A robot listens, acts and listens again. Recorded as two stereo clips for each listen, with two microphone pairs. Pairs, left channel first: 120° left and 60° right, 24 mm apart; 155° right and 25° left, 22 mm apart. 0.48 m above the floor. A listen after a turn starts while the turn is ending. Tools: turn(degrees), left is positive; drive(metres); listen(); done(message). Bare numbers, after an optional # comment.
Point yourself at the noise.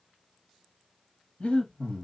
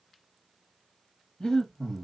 # The breathing: 160° left.
turn(160)
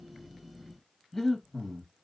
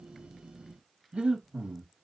# The breathing is now 35° left.
turn(35)
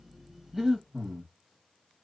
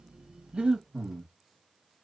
# The breathing is now 10° left.
turn(10)
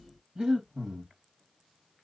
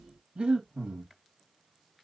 done("Facing the breathing, 1 to 2 m away.")